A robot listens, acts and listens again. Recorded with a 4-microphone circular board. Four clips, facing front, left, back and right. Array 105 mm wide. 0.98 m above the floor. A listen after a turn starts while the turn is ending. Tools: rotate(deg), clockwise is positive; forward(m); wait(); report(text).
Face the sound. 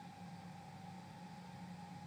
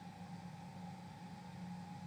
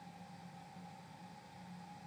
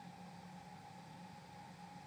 wait()
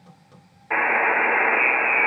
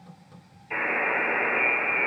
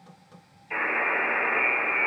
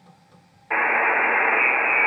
rotate(40)
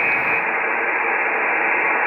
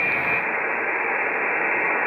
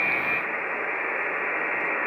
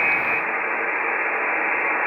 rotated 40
report("Facing the buzzer, 2 to 4 m away.")